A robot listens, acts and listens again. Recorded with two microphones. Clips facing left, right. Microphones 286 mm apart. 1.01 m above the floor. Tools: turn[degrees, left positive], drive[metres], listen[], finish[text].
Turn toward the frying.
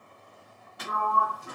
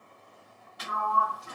Action: listen[]
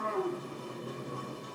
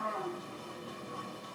Action: listen[]
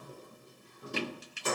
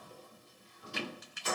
Thought: The frying: about 35° left or 145° left.
Action: turn[35]
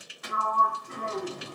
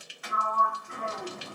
Thought: So it is at 105° left.
Action: turn[105]
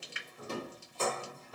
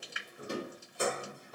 Thought: The frying is now 30° left.
Action: turn[30]
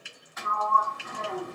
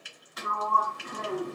Action: finish[Found it: frying, straight ahead, 1 to 2 m away.]